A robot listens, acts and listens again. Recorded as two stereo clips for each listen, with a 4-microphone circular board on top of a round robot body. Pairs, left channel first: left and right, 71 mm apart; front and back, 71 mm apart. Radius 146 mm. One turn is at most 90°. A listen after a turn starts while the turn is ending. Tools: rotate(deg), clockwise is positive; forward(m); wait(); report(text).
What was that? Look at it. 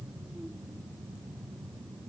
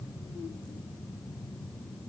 wait()
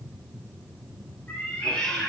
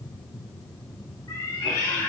rotate(-25)
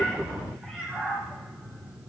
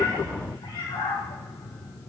report("Facing the cat meowing, 2 to 4 m away.")